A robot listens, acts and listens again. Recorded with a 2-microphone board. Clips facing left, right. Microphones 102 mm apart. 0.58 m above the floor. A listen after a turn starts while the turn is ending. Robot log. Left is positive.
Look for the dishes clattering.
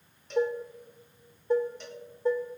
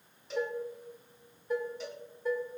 note: The dishes clattering: about 30° left or 150° left.
cmd yaw +30
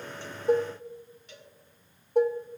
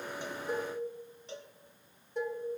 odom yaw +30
note: So it is at 125° left.
cmd yaw +125
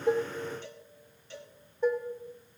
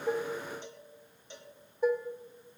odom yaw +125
end: Facing the dishes clattering.